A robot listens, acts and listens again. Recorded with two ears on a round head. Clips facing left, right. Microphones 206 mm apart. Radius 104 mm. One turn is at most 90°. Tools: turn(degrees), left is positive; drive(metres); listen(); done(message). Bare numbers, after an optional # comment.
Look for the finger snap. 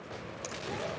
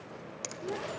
# The finger snap: about 30° right or 150° right.
turn(-30)
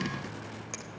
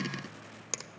# So it is at 110° right.
turn(-90)
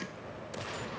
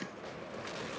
# Nothing new. It was at 20° right.
turn(-20)
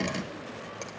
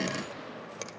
# The finger snap is now 25° right.
turn(-25)
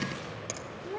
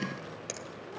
# The finger snap is now 10° right.
turn(-10)
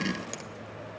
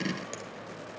listen()
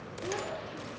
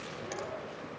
listen()
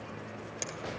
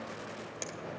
done("Found it: a finger snap, straight ahead, under 1 m away.")